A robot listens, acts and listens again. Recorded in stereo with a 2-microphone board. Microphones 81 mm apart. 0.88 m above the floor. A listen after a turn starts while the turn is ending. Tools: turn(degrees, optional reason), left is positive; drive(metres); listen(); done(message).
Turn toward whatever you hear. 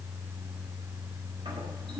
turn(degrees=-70, reason="The toilet flushing: about 70° right or 110° right.")
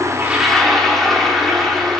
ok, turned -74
done("Found it: a toilet flushing, straight ahead, 1 to 2 m away.")